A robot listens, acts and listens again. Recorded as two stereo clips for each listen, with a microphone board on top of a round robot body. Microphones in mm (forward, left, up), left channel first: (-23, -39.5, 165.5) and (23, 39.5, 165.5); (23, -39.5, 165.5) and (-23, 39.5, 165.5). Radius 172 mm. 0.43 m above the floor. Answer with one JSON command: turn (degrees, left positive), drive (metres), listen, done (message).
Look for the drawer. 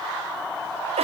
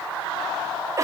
{"listen": true}
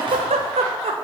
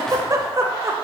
{"listen": true}
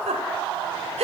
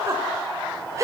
{"done": "I can't make out a drawer to turn to."}